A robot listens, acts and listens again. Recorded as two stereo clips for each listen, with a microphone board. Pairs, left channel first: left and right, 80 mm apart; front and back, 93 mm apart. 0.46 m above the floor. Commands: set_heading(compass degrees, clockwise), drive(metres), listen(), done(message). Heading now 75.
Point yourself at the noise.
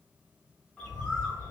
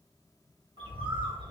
set_heading(270)
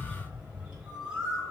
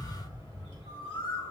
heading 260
set_heading(270)
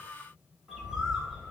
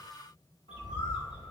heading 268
done("Facing the bird.")